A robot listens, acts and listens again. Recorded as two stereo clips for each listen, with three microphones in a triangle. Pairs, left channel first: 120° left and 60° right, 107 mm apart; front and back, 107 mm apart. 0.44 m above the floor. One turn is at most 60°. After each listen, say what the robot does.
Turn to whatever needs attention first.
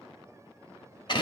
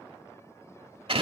Keep listening.
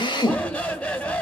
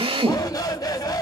Turn 40° left.
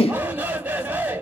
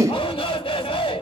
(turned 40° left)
Turn 10° left.
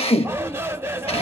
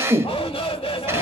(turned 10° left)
Facing the shout.